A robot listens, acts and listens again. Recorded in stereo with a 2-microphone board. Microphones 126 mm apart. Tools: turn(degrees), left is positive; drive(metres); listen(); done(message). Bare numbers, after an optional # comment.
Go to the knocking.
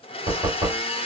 # The knocking: about 50° right or 130° right.
turn(-50)
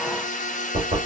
# So it is at 80° right.
turn(-80)
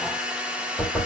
# The knocking is now 10° left.
turn(10)
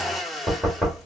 drive(1.0)
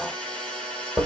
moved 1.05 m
drive(1.0)
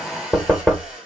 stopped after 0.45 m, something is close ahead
# The knocking is now 10° left.
turn(10)
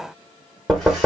done("I am next to the knocking.")